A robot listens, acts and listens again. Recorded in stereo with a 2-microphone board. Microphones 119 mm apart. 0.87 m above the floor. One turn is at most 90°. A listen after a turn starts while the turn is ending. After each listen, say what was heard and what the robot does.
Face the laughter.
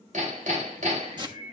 The laughter: about 55° right or 125° right. Turn 55° right.
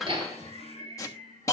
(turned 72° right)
So it is at 55° right. Turn 55° right.
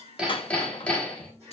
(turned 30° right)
The laughter is now 25° right. Turn 25° right.
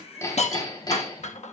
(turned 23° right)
Keep listening.
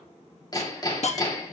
Keep listening.
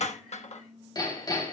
I heard laughter from this way, but can't make it out now.